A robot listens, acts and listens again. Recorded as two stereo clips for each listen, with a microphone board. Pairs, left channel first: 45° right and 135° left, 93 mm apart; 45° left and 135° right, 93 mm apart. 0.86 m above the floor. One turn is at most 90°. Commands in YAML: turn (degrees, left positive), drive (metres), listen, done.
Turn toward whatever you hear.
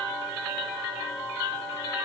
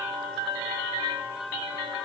listen: true
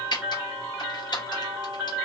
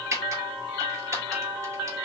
turn: -75
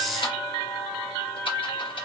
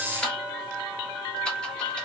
turn: -30
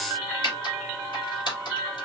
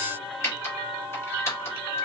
turn: -10
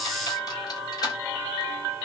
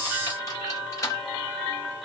done: "Facing the typing on a keyboard."